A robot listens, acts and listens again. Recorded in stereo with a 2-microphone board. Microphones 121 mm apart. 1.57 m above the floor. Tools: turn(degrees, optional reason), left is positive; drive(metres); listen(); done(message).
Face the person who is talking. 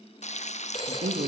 turn(degrees=-90)
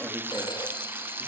listen()
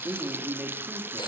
turn(degrees=-15, reason="The man speaking is now 15° right.")
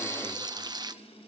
listen()
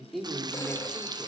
done("Found it: a man speaking, straight ahead, 2 to 4 m away.")